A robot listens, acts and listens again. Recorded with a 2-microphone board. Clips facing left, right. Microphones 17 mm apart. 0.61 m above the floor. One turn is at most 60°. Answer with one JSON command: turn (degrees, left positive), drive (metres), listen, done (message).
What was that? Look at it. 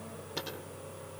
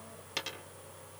{"turn": -50}
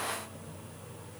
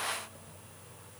{"listen": true}
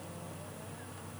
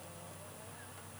{"done": "I heard a dropped coin, but can't make it out now. It was about straight ahead or 80° right."}